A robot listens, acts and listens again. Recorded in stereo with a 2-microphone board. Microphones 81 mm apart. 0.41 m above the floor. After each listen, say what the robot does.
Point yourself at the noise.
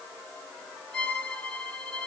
Turn 75° right.
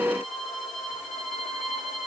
Found it: a violin, straight ahead.